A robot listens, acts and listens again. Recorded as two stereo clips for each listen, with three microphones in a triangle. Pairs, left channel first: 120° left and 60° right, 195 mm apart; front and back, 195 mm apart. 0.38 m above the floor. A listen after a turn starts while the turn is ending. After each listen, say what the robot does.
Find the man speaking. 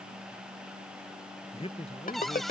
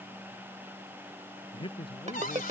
Turn 60° left.
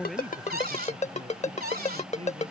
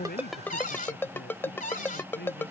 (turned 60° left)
Keep listening.
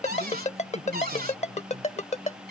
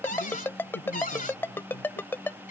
Keep listening.
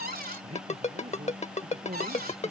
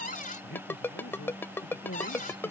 Found it: a man speaking, straight ahead.